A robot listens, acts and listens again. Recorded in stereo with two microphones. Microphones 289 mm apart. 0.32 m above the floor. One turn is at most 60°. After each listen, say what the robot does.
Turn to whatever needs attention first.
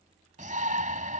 Turn 30° right.
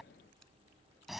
Facing the shout.